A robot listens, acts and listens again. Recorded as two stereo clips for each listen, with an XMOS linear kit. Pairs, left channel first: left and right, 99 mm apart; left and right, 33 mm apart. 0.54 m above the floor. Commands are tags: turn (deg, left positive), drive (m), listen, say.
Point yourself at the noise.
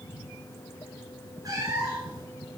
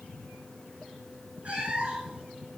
<turn deg="-40"/>
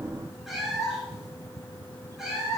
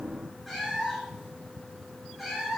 <say>Found it: a cat meowing, straight ahead, over 4 m away.</say>